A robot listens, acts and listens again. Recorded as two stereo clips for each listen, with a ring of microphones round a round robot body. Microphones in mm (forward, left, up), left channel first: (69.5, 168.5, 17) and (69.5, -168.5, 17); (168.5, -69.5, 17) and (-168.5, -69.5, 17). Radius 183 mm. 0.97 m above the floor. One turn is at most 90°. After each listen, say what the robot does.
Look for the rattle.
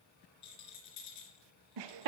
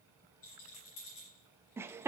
Turn 55° left.
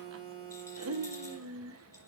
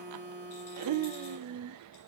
Keep listening.
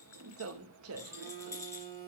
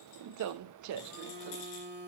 Turn 10° left.
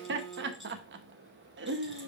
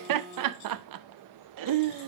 Keep listening.
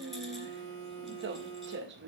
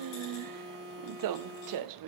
Keep listening.
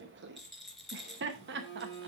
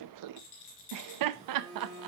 Found it: a rattle, straight ahead, 2 to 4 m away.